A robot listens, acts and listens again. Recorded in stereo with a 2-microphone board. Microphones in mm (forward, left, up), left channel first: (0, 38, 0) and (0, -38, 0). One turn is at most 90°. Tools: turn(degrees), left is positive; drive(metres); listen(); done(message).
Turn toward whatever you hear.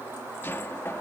turn(degrees=30)
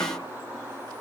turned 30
listen()
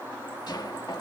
turn(degrees=90)
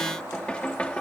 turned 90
turn(degrees=15)
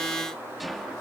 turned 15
done("Found it: knocking, straight ahead.")